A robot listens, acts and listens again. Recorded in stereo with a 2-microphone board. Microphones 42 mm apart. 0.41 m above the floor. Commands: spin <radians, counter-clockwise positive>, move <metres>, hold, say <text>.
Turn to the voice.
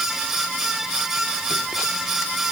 hold
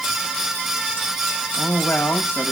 spin 1.05
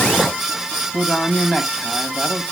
spin 0.26
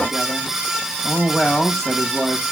say Facing the man speaking, 2 to 4 m away.